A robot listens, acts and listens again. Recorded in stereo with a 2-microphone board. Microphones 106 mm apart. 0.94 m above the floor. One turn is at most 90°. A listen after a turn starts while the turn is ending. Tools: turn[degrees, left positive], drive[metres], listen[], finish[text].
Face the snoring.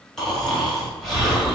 Action: turn[30]
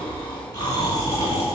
Thought: So it is at 145° left.
Action: turn[90]
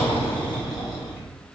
Thought: The snoring is now 40° left.
Action: turn[40]
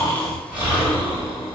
Thought: The snoring is now 15° right.
Action: turn[-15]
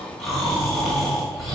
Action: finish[Found it: snoring, straight ahead.]